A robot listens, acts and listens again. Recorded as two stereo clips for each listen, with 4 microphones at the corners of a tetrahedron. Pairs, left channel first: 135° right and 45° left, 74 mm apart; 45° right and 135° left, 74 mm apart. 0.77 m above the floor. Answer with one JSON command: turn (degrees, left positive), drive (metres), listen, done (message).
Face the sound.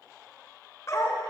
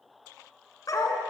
{"turn": -80}
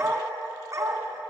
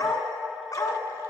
{"done": "Facing the dog barking."}